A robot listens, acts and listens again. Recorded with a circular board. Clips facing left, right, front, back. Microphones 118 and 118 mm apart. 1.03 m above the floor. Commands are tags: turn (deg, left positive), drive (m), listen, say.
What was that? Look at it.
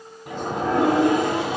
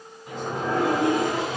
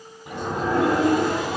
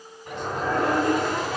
<turn deg="80"/>
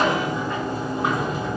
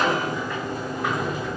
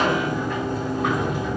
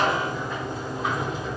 <turn deg="30"/>
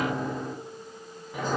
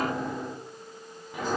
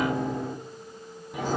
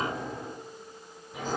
<say>Facing the sliding door, 2 to 4 m away.</say>